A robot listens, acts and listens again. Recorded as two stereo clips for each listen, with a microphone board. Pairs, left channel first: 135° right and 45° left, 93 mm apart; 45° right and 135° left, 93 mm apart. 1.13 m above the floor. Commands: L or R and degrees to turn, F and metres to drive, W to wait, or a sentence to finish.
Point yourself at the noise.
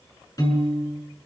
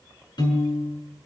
R85
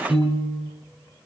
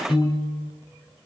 R25
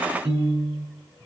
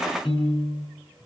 R15
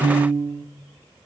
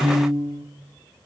Facing the piano, over 4 m away.